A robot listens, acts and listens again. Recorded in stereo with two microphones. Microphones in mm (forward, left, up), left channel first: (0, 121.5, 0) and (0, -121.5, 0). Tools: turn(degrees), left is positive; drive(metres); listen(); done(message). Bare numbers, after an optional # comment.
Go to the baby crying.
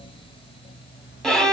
listen()
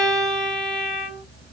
listen()
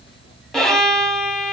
done("I can't make out a baby crying to turn to.")